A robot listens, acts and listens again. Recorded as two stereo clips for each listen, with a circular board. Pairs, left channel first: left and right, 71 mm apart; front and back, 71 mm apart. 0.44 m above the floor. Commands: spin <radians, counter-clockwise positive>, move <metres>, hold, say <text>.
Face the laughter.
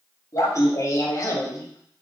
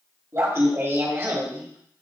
spin 2.18
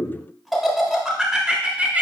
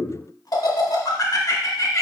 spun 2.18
spin -0.44
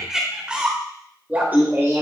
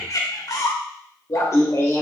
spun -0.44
spin -0.79
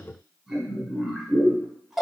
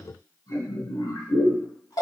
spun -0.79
say Facing the laughter, 1 to 2 m away.